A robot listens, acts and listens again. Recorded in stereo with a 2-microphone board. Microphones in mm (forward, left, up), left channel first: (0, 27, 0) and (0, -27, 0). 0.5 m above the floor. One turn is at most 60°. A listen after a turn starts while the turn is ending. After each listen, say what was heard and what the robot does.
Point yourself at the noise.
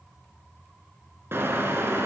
The car horn: about 50° right or 130° right. Turn 50° right.
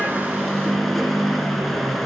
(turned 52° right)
Facing the car horn, 2 to 4 m away.